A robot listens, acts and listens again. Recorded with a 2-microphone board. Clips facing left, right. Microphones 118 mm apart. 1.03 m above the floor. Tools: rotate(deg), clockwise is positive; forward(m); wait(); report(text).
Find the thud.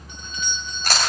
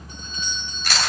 wait()
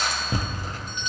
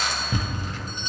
rotate(-40)
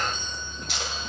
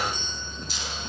wait()
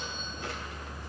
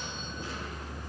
report("I heard a thud, but can't make it out now. It was about straight ahead or 100° left.")